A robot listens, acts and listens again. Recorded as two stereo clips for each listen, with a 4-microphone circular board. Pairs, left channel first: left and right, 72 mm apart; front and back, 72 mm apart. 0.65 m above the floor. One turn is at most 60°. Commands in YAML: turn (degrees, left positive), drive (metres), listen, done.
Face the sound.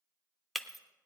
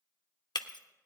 done: "Found it: breaking glass, straight ahead, under 1 m away."